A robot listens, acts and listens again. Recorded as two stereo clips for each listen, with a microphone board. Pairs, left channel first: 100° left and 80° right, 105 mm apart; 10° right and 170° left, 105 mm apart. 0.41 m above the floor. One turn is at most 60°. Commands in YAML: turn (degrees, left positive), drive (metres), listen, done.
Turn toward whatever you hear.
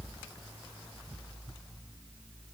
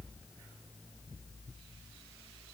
listen: true
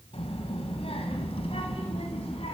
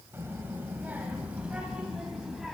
turn: 60
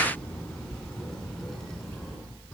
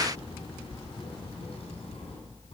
turn: 15
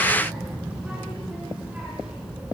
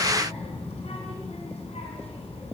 done: "Found it: a child speaking, straight ahead, 2 to 4 m away."